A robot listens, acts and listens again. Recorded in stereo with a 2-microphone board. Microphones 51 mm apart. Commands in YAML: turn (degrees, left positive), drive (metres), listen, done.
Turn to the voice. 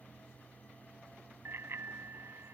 listen: true
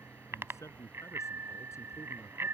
turn: 70
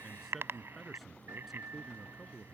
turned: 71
done: "Found it: a man speaking, straight ahead."